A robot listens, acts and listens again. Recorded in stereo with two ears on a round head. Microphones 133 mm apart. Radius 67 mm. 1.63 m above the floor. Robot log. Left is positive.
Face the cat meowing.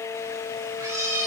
note: The cat meowing: about 25° right or 155° right.
cmd yaw -25
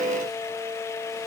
cmd idle
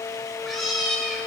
end: Facing the cat meowing.